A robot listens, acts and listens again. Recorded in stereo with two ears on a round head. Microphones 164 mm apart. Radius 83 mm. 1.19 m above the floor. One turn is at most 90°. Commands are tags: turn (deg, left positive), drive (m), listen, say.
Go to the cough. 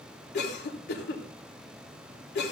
<turn deg="60"/>
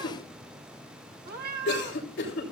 <turn deg="60"/>
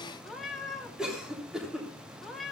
<drive m="1.0"/>
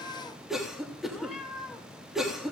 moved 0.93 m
<drive m="1.0"/>
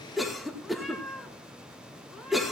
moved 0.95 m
<drive m="1.0"/>
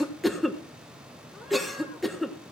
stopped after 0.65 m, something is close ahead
<say>Arrived at the cough, straight ahead.</say>